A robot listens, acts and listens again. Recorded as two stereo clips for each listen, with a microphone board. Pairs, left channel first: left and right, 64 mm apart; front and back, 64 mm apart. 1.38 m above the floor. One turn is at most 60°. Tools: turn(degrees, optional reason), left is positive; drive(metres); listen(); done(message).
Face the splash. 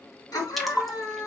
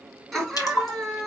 done("Facing the splash, 1 to 2 m away.")